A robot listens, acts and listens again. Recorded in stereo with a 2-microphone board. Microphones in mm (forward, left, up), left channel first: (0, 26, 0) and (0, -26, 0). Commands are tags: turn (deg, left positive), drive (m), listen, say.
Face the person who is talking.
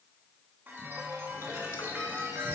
<listen/>
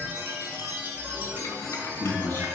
<turn deg="35"/>
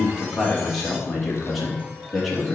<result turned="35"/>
<say>Found it: a man speaking, straight ahead.</say>